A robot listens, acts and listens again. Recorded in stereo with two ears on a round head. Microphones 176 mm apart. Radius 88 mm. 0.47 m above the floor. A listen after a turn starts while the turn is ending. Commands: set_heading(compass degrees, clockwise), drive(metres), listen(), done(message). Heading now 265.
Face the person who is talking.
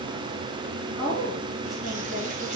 set_heading(235)
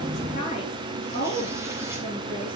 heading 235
set_heading(85)
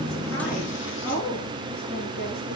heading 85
set_heading(35)
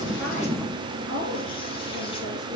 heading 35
set_heading(50)
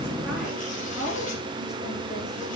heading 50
done("Found it: a woman speaking, straight ahead, over 4 m away.")